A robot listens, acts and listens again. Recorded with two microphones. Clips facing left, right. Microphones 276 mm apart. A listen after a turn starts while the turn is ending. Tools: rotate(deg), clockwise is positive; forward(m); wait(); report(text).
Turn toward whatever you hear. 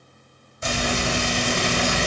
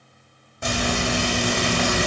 rotate(60)
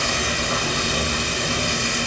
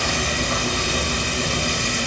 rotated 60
rotate(40)
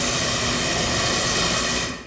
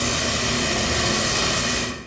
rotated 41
report("Facing the frying.")